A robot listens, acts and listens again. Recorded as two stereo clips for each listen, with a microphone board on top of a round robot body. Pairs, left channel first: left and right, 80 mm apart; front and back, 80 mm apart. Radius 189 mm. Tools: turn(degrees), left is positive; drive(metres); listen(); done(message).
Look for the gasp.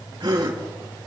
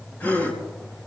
turn(degrees=-65)
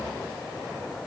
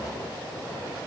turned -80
turn(degrees=15)
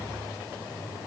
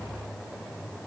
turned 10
done("Facing where the gasp came from. I can't hear it now.")